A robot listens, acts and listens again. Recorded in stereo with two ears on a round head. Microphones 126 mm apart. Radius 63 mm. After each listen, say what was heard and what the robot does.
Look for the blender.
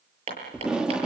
Keep listening.
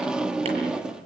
Keep listening.
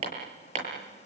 The blender: about 45° left or 135° left. Turn 45° left.
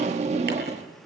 Keep listening.
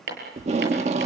Keep listening.
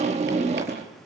I heard a blender, but can't make it out now. It was about straight ahead or 90° left.